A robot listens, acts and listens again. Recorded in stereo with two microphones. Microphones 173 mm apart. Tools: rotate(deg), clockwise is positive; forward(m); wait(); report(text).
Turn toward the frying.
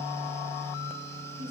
wait()
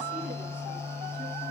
wait()
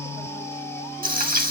rotate(55)
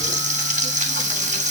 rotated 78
rotate(45)
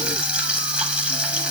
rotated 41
report("Facing the frying.")